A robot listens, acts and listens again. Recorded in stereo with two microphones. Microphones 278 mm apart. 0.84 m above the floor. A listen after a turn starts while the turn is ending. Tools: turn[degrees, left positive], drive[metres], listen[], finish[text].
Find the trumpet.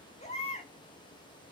Action: listen[]
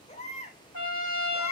Action: turn[90]
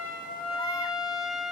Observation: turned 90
Action: finish[Found it: a trumpet, straight ahead.]